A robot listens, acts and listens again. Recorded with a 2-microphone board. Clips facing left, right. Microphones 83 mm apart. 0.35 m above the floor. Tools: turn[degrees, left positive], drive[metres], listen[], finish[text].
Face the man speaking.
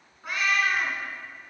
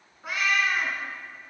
Action: listen[]
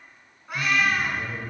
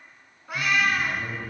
Action: turn[30]
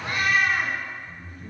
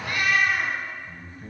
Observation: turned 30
Thought: So it is at 30° right.
Action: turn[-30]
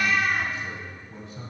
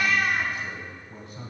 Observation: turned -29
Action: finish[Facing the man speaking.]